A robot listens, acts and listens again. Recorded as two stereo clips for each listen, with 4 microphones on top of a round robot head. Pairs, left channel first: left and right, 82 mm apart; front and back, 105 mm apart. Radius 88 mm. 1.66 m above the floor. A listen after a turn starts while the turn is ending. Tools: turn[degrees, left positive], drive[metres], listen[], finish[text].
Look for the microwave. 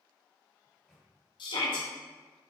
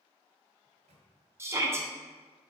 Thought: The microwave: 175° left.
Action: turn[175]
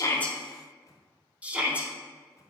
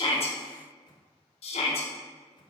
Thought: The microwave is now 40° left.
Action: turn[40]
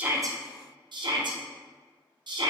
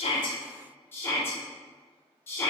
Action: listen[]
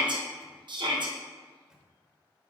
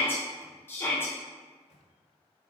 Thought: The microwave is now 10° right.
Action: turn[-10]
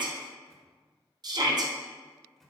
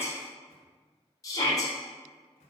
Action: finish[Facing the microwave.]